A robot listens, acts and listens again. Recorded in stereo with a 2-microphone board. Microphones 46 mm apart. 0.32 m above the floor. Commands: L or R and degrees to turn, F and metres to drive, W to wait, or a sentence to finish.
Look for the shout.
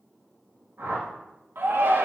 R65
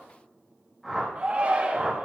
R35
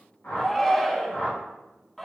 L10
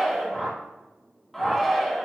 Found it: a shout, straight ahead, 2 to 4 m away.